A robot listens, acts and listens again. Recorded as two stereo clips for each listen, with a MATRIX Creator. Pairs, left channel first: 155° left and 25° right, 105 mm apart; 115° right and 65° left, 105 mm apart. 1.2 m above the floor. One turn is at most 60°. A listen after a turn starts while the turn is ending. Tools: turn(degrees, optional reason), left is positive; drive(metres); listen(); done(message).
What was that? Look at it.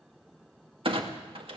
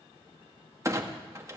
done("Found it: a clunk, straight ahead.")